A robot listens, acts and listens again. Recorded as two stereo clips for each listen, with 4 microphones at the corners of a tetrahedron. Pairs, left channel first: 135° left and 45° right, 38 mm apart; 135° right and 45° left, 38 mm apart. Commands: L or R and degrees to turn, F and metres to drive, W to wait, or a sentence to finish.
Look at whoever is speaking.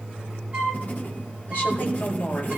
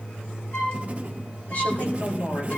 L175
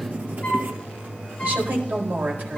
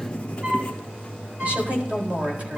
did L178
Found it: a woman speaking, straight ahead.